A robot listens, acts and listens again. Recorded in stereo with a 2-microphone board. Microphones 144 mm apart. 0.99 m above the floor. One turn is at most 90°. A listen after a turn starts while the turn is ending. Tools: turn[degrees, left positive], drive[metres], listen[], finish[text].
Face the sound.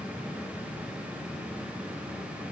Action: listen[]
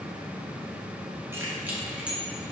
Action: turn[-30]
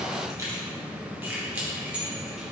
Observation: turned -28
Action: turn[-30]
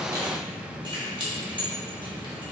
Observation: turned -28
Thought: So it is at 145° right.
Action: turn[-90]
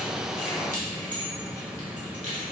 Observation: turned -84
Thought: The keys jangling is now 60° right.
Action: turn[-60]
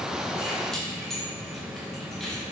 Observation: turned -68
Action: finish[Found it: keys jangling, straight ahead, 1 to 2 m away.]